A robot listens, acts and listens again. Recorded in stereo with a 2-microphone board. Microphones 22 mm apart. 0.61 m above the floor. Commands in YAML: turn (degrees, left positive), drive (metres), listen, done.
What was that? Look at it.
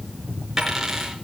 turn: -20
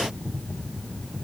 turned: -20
listen: true
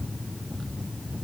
done: "I heard a dropped coin, but can't make it out now. It was about straight ahead or 140° right."